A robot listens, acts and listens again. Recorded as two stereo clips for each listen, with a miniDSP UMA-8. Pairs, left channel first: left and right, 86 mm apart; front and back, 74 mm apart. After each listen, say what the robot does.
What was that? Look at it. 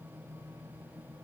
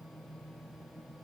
Keep listening.
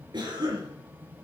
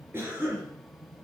Turn 120° right.
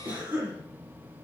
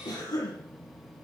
Turn 20° right.
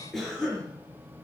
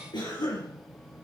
Facing the cough.